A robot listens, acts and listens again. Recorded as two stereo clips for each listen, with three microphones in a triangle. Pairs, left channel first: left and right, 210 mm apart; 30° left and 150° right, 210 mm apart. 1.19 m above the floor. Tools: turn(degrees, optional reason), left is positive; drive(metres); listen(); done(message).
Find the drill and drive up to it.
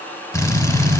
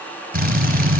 turn(degrees=170, reason="The drill: 170° left.")
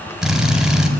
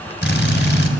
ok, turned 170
drive(metres=1.0)
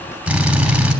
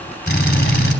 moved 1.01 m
drive(metres=1.0)
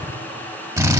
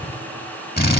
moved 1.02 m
turn(degrees=-10, reason="The drill is now 10° right.")
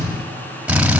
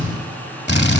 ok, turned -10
drive(metres=1.0)
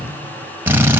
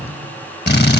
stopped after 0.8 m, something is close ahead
turn(degrees=-10, reason="The drill is now 10° right.")
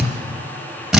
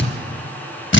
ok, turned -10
done("Arrived at the drill, straight ahead.")